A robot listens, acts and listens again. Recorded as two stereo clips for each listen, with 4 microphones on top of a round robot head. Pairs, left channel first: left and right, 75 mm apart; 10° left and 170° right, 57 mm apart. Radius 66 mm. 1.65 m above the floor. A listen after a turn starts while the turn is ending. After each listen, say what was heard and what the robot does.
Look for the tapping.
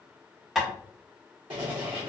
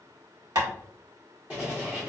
The tapping: 175° right. Turn 175° right.
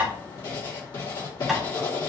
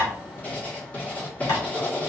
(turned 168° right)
Facing the tapping.